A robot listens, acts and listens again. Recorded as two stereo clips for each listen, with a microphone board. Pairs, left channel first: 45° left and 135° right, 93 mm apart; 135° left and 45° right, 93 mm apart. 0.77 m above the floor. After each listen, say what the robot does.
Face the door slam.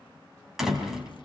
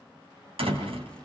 Turn 50° right.
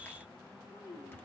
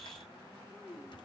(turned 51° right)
I heard a door slam from this way, but can't make it out now.